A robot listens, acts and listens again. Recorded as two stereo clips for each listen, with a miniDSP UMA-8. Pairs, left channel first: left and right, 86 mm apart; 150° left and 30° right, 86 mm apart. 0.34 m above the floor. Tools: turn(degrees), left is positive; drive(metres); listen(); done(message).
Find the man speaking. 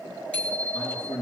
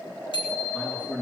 turn(degrees=75)
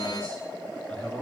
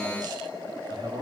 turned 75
turn(degrees=10)
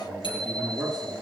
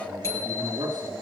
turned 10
done("Found it: a man speaking, straight ahead.")